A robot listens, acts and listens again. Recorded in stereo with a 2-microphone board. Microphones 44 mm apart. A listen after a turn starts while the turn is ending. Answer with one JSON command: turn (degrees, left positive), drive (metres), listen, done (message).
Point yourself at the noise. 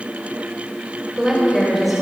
{"turn": -30}
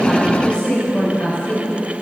{"turn": 35}
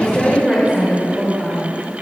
{"turn": 25}
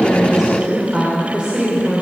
{"turn": -15}
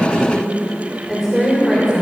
{"done": "Found it: a woman speaking, straight ahead."}